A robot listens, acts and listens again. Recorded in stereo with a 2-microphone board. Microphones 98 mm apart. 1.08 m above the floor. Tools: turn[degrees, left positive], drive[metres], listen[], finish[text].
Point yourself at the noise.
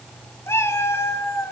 Thought: The cat meowing: about 30° left or 150° left.
Action: turn[30]
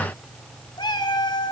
Thought: So it is at 125° left.
Action: turn[125]
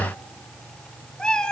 Thought: The cat meowing is now 10° left.
Action: turn[10]
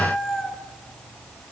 Action: finish[Facing the cat meowing.]